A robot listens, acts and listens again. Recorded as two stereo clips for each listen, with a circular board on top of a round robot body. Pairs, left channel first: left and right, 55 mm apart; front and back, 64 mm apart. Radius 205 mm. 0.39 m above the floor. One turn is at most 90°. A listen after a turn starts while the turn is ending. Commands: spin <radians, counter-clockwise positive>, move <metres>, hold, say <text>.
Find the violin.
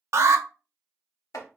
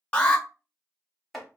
hold
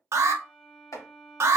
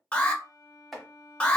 spin 0.44
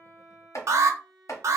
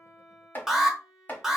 say Facing the violin, 1 to 2 m away.